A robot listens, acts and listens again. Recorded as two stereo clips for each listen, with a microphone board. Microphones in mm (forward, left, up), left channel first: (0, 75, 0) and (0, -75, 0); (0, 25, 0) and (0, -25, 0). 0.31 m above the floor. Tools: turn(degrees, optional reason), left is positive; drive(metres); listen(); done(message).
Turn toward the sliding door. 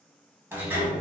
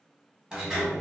turn(degrees=-30)
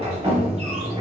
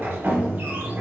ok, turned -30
turn(degrees=-130, reason="So it is at 130° right.")
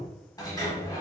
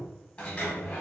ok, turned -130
turn(degrees=25, reason="The sliding door is now 25° left.")
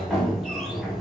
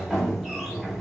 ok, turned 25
done("Found it: a sliding door, straight ahead.")